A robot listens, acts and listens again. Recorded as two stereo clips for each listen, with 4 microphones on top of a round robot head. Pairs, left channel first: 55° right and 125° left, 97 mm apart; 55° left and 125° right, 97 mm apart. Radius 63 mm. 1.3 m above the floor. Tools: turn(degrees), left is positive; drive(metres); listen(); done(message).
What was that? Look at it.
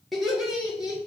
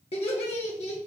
turn(degrees=45)
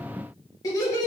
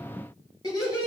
done("Found it: laughter, straight ahead, 2 to 4 m away.")